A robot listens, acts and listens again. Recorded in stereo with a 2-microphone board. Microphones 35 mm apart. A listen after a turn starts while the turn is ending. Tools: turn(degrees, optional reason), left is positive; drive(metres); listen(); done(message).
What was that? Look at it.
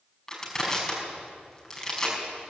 turn(degrees=15, reason="The crushing: about 15° left or 165° left.")
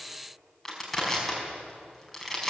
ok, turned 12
done("Found it: crushing, straight ahead.")